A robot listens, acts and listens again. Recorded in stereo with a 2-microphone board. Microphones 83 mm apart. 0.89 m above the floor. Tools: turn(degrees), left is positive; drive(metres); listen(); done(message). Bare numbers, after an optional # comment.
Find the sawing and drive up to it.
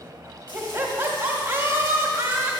listen()
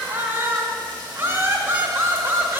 listen()
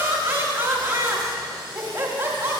done("I can't make out sawing to turn to.")